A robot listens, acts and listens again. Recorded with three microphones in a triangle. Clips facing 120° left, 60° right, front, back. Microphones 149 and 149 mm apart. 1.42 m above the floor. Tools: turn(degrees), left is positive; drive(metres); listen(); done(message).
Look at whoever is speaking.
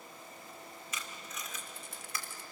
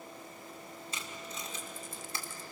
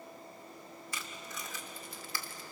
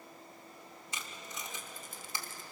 listen()
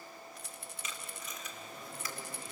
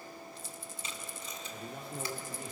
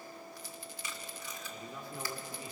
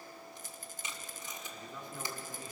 turn(degrees=-75)
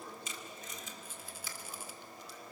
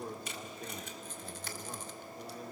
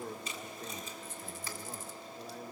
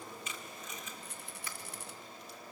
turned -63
turn(degrees=-15)
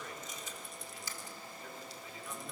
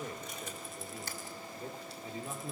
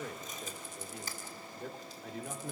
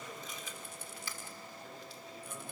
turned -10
done("Found it: a man speaking, straight ahead.")